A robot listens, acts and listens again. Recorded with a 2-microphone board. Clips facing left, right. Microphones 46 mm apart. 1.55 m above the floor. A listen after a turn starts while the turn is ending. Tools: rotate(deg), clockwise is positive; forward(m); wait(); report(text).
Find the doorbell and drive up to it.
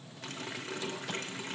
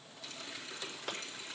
wait()
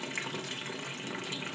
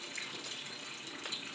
wait()
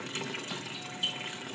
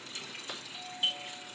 rotate(15)
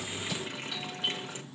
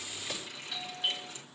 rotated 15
forward(1.0)
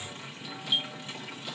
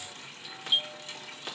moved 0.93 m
forward(1.0)
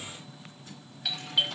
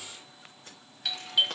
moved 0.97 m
forward(1.0)
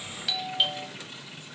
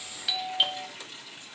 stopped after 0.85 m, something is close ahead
report("Arrived at the doorbell, straight ahead.")